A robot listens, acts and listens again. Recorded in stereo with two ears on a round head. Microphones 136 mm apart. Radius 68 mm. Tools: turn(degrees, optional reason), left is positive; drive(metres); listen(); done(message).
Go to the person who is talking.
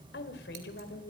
turn(degrees=75, reason="The woman speaking: about 75° left or 105° left.")
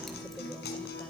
listen()
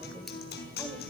listen()
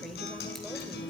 done("I heard a woman speaking, but can't make it out now. It was about straight ahead or 30° left. I did not reach it.")